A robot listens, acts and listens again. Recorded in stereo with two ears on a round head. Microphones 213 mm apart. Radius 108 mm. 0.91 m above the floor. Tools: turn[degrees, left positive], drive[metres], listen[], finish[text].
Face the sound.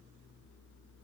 Action: listen[]
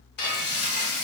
Thought: The frying: about 45° left or 135° left.
Action: turn[45]
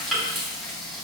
Action: finish[Found it: frying, straight ahead, 2 to 4 m away.]